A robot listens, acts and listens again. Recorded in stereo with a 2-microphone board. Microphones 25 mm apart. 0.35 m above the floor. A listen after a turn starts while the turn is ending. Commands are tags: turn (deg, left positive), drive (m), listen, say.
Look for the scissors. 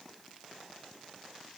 <listen/>
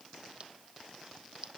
<turn deg="-45"/>
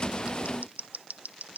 <turn deg="-90"/>
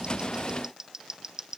<turn deg="-20"/>
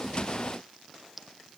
<say>Found it: scissors, straight ahead.</say>